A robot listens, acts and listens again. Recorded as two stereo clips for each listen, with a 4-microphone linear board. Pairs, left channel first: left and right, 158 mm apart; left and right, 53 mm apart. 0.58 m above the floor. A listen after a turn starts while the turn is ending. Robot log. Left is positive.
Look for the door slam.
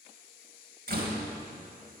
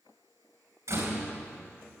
note: The door slam: about 75° right or 105° right.
cmd yaw -75
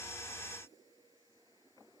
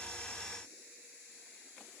cmd idle
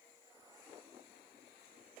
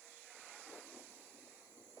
end: I heard a door slam, but can't make it out now. It was about straight ahead or 30° right.